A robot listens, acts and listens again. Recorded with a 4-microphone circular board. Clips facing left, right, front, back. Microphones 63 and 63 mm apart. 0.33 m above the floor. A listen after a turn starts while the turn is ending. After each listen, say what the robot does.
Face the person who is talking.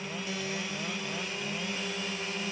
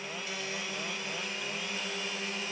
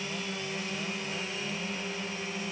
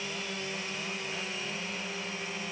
Keep listening.
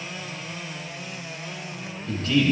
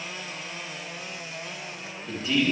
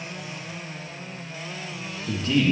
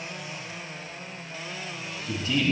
Turn 10° right.
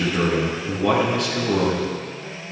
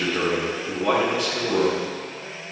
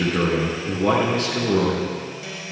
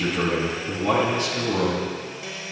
Found it: a man speaking, straight ahead.